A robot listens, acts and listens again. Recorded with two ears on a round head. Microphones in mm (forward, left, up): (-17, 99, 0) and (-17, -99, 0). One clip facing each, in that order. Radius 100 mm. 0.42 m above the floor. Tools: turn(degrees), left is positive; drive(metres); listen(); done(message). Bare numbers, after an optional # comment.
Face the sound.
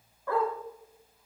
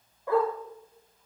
# The dog barking: about 15° right or 165° right.
turn(-15)
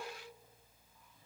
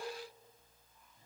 listen()
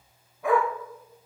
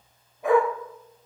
# The dog barking: about 20° right or 160° right.
turn(-20)
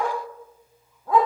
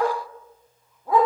turn(-30)
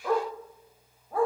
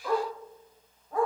done("Facing the dog barking.")